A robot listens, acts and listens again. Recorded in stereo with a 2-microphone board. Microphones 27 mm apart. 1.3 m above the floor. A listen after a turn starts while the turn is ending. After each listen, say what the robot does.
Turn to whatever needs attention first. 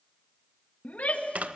Turn 75° left.
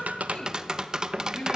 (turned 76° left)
Turn 30° left.
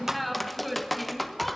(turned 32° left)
Found it: a shout, straight ahead.